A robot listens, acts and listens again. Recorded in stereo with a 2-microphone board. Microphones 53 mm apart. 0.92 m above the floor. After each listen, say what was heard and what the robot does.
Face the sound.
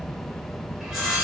Turn 30° right.
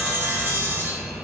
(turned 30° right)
So it is at 135° right. Turn 135° right.
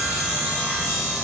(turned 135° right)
Facing the sawing.